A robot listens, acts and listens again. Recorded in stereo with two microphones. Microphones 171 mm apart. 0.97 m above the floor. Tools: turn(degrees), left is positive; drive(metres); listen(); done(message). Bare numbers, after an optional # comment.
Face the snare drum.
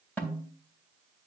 turn(30)
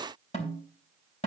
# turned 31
# So it is at 140° left.
turn(140)
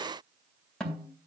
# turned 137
done("Facing the snare drum.")